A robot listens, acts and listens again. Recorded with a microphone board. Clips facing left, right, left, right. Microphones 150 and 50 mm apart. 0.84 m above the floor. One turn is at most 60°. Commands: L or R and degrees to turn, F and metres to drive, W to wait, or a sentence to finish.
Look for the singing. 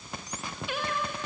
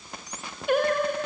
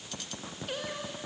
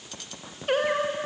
R50
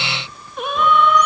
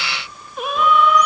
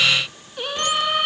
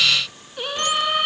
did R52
Facing the singing.